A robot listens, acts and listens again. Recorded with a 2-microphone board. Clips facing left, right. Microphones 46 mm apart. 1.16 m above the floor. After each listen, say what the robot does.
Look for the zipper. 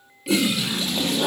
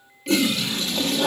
Turn 45° left.
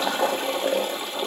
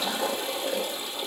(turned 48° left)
Keep listening.
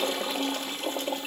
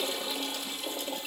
Keep listening.
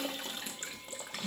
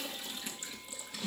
Found it: a zipper, straight ahead.